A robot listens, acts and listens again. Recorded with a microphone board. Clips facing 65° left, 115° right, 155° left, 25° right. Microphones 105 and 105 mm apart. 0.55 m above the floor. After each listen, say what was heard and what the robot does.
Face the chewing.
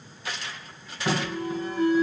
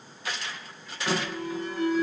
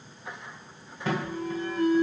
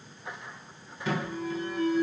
Keep listening.
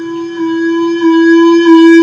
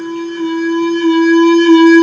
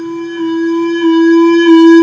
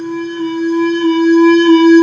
Keep listening.
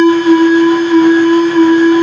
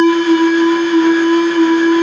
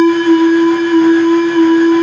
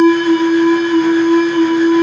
I can't make out chewing to turn to.